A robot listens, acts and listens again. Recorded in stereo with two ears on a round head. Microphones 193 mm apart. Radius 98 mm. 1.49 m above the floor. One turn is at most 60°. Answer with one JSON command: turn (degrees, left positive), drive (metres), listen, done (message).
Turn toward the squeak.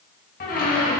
{"turn": 40}
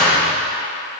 {"done": "Found it: a squeak, straight ahead, 1 to 2 m away."}